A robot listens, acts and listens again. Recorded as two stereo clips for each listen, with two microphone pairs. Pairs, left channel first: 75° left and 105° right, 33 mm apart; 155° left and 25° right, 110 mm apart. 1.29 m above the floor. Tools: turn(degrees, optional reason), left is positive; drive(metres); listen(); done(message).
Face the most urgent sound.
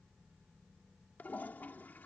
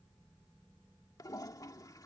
listen()
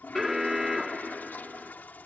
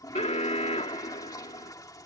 turn(degrees=175, reason="The alarm: 175° left.")
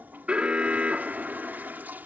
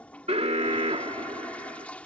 turn(degrees=-50, reason="The alarm is now 50° right.")
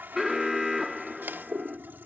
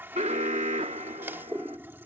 turn(degrees=-20, reason="The alarm is now 20° right.")
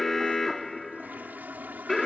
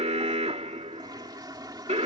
done("Found it: an alarm, straight ahead.")